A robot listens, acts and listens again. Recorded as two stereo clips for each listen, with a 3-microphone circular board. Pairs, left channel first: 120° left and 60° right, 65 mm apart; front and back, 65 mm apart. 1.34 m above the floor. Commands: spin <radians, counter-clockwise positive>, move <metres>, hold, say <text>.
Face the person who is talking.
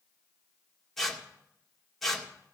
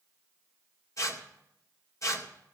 hold
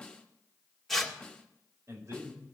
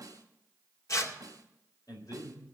spin -0.35
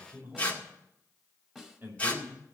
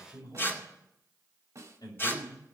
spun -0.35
say Found it: a man speaking, straight ahead.